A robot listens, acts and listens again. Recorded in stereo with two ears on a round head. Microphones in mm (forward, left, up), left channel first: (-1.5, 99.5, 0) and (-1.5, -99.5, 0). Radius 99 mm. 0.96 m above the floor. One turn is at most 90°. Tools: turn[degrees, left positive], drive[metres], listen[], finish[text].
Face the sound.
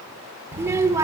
Action: turn[-30]
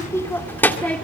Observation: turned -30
Action: finish[Found it: a child speaking, straight ahead, 1 to 2 m away.]